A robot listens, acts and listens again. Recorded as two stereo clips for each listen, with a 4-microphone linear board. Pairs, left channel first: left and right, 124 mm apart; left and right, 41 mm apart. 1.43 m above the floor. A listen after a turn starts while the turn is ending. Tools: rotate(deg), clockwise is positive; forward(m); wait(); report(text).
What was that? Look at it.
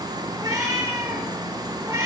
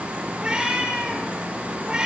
rotate(20)
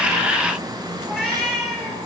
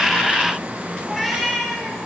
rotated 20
report("Found it: a cat meowing, straight ahead.")